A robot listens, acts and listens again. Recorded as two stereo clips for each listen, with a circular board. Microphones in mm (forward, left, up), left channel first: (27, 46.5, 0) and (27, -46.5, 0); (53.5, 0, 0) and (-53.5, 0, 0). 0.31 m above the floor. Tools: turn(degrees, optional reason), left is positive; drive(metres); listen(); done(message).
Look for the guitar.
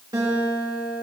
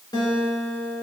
turn(degrees=-45, reason="The guitar: 45° right.")
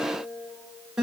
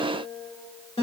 done("Facing the guitar.")